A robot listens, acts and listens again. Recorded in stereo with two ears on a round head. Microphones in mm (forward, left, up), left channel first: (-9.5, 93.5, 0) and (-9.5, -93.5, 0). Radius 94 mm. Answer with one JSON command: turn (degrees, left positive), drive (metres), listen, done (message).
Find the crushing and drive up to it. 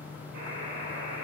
{"listen": true}
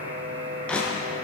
{"turn": 30}
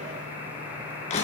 {"turn": 145}
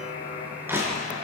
{"turn": -10}
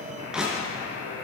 {"drive": 1.0}
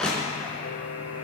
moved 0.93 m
{"drive": 1.0}
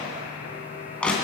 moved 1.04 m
{"drive": 1.0}
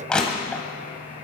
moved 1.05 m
{"drive": 1.0}
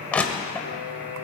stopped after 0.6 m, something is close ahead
{"done": "I am next to the crushing."}